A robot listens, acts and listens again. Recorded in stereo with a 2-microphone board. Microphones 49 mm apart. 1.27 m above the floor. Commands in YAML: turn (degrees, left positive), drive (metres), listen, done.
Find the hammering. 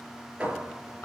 turn: -20
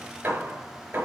turn: -140
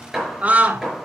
turn: -10
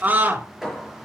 done: "Found it: hammering, straight ahead."